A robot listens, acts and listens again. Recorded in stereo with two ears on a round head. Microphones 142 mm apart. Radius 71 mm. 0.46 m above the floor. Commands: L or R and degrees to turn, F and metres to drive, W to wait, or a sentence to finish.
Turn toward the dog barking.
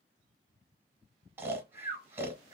W
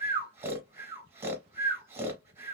W
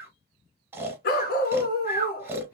L60
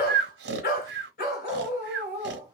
L60
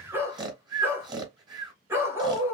R15
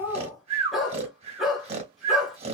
Found it: a dog barking, straight ahead, 1 to 2 m away.